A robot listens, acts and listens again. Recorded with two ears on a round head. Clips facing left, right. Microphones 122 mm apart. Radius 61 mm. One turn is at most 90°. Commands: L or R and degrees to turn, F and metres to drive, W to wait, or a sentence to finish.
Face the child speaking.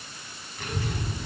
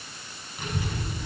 R30
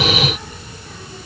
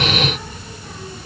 R90
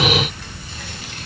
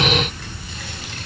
R85
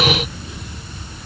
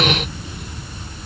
R30
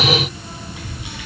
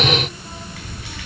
L20
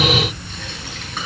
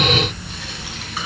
Found it: a child speaking, straight ahead.